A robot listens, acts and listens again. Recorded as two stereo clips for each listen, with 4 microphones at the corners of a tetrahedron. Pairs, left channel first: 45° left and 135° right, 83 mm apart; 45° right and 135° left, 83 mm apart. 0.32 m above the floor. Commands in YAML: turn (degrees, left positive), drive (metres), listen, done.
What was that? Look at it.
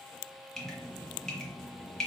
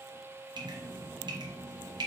turn: 130
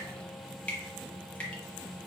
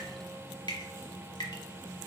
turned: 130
turn: -30
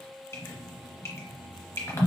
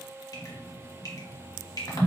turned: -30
turn: -10
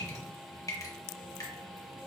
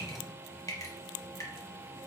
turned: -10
done: "Facing the dripping, 1 to 2 m away."